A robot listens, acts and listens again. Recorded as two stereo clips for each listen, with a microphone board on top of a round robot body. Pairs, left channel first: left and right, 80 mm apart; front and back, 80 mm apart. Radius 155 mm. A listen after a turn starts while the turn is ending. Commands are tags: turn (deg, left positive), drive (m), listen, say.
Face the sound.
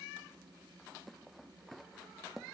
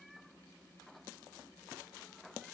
<listen/>
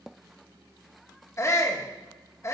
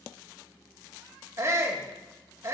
<turn deg="135"/>
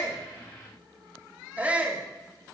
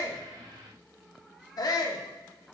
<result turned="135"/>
<turn deg="-20"/>
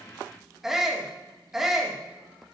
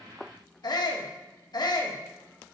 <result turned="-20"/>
<say>Facing the shout.</say>